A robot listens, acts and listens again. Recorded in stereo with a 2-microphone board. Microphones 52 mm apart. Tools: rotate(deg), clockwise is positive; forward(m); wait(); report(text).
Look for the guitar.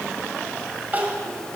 wait()
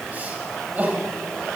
wait()
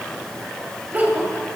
report("I can't make out a guitar, only crying.")